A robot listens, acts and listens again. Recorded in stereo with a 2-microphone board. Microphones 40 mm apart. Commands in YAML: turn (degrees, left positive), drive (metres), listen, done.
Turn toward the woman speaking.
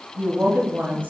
turn: -55
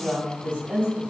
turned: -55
turn: -30
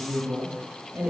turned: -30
turn: -30
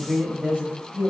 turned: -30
turn: -30
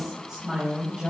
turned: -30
turn: -20
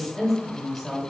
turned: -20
done: "Found it: a woman speaking, straight ahead."